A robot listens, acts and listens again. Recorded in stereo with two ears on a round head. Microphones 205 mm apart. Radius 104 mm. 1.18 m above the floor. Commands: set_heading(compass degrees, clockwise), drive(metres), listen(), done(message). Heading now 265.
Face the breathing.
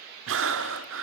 set_heading(325)
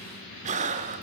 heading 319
set_heading(354)
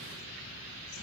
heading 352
listen()
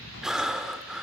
done("Facing the breathing.")